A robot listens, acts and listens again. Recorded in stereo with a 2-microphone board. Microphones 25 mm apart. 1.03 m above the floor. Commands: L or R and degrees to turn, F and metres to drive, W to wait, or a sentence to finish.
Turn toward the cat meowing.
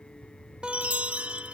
W
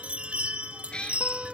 L40
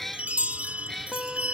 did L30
L10
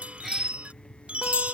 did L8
W
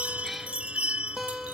W
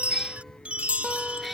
Facing the cat meowing.